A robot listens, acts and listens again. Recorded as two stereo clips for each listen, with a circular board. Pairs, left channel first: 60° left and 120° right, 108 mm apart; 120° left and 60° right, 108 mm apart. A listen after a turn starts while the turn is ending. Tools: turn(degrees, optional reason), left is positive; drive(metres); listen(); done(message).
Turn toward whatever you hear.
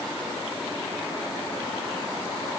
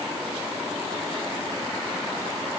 listen()
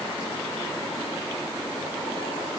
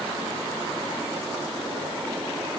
listen()
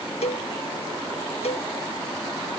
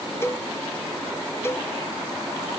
turn(degrees=55, reason="The cowbell: 55° left.")
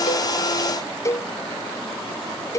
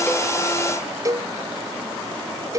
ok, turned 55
done("Facing the cowbell.")